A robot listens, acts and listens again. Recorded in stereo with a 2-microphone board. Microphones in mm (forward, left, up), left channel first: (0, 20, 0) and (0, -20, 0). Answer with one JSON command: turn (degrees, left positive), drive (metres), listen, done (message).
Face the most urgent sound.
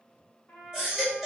{"turn": -30}
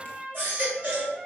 {"turn": -140}
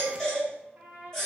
{"turn": 10}
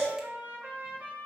{"done": "Facing the baby crying."}